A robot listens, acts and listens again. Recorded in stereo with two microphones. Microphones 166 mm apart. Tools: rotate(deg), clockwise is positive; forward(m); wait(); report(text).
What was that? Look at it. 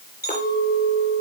rotate(-70)
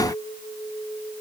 rotate(-40)
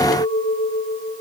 rotate(-15)
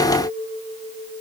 report("Found it: a clink, straight ahead, over 4 m away.")